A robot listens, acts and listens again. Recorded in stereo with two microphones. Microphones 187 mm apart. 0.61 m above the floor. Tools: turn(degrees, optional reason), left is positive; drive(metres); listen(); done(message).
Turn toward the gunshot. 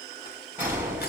turn(degrees=-30)
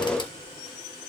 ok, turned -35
listen()
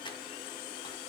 done("I heard a gunshot, but can't make it out now. It was about 25° left or 135° right.")